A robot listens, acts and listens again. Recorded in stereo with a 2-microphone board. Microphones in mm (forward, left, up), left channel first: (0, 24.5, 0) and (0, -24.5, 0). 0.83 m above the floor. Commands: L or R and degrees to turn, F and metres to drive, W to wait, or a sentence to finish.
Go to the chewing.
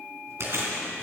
R65
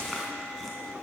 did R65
W
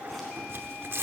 W
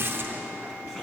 I heard chewing, but can't make it out now. It was about straight ahead or 50° right. I did not reach it.